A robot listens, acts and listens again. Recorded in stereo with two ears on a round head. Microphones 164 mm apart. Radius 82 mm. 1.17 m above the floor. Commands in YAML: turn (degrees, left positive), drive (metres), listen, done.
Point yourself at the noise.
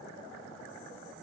listen: true
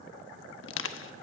turn: 90
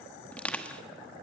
done: "Found it: crushing, straight ahead, 1 to 2 m away."